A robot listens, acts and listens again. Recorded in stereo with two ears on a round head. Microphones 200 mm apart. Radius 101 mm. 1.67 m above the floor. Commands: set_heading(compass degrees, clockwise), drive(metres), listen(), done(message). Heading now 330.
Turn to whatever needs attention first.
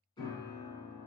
listen()
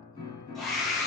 set_heading(300)
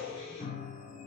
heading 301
set_heading(331)
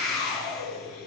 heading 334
done("Facing the scream, 1 to 2 m away.")